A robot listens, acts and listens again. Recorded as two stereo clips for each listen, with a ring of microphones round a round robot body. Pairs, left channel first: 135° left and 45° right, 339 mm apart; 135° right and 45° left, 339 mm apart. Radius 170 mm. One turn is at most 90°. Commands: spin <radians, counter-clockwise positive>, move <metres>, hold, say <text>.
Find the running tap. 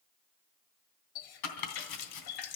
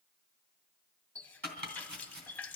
spin 1.57
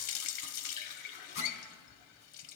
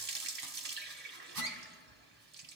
spin 1.57
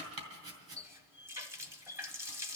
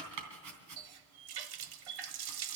spin 0.61
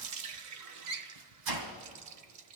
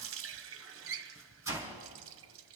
say Facing the running tap.